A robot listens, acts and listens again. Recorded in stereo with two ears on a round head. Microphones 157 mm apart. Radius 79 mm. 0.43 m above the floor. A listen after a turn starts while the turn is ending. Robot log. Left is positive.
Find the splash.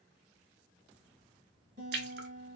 note: The splash: about 60° right or 120° right.
cmd yaw -60
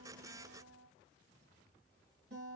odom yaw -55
cmd idle
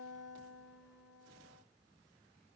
end: I heard a splash, but can't make it out now. It was about 5° right or 65° right.